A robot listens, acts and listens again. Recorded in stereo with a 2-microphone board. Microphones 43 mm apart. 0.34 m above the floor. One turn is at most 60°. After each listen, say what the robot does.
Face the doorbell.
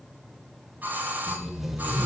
Turn 45° right.
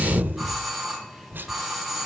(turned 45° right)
Found it: a doorbell, straight ahead, 2 to 4 m away.